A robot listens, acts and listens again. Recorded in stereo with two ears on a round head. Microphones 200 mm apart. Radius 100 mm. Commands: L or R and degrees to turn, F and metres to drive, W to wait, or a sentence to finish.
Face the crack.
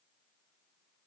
W
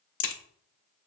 L55
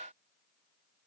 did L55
W
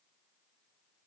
I heard a crack, but can't make it out now. It was about straight ahead or 70° left.